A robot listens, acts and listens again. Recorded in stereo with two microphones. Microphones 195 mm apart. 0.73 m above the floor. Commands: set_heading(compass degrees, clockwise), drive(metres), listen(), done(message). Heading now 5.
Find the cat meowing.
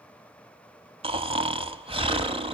listen()
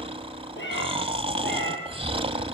set_heading(295)
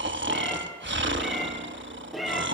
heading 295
done("Found it: a cat meowing, straight ahead, over 4 m away.")